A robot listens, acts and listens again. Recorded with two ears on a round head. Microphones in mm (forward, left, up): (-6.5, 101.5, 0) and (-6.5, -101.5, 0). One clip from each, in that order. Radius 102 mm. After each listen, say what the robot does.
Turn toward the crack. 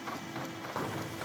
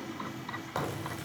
Turn 40° right.
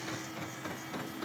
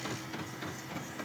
Keep listening.
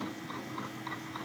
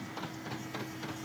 I heard a crack, but can't make it out now. It was about straight ahead or 100° right.